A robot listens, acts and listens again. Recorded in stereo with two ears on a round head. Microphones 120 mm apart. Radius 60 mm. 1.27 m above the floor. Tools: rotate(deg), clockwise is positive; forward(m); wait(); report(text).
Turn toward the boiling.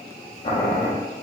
rotate(-40)
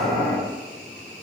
rotate(-95)
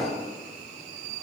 wait()
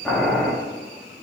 report("Facing the boiling, 1 to 2 m away.")